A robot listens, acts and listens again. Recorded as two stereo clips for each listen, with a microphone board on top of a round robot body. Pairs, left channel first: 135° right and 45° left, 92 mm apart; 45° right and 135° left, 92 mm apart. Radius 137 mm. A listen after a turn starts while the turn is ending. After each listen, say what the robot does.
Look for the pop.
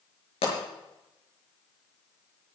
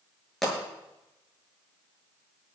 Turn 130° right.
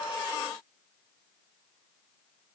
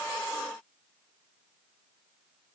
I heard a pop from this way, but can't make it out now.